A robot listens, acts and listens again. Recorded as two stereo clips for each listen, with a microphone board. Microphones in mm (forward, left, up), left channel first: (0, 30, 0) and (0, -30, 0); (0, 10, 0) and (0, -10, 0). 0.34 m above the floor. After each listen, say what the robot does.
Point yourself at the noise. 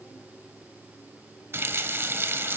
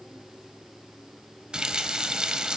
Turn 45° right.
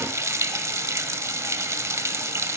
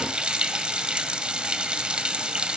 Turn 85° right.
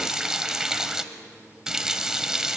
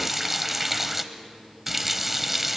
Turn 15° right.
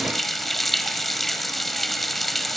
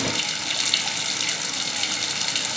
Found it: a running tap, straight ahead.